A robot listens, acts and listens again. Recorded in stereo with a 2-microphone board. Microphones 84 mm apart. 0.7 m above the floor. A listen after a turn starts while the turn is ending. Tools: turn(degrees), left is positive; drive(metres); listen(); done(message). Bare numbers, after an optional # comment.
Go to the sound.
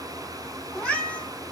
# The cat meowing: about 20° left or 160° left.
turn(20)
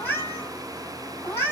# So it is at 145° left.
turn(145)
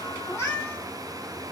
# The cat meowing is now 20° left.
turn(20)
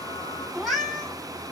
drive(1.0)
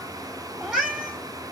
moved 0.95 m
# The cat meowing is now 10° right.
turn(-10)
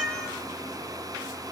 listen()
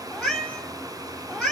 drive(1.0)
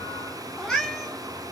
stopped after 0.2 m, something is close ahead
done("I am next to the cat meowing.")